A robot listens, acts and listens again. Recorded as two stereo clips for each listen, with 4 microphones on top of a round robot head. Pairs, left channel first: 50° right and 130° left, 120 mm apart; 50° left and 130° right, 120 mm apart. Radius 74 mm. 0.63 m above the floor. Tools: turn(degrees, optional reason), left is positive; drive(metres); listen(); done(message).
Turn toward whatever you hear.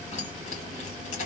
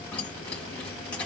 turn(degrees=-30, reason="The keys jangling: 30° right.")
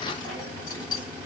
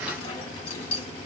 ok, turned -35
done("Found it: keys jangling, straight ahead, 2 to 4 m away.")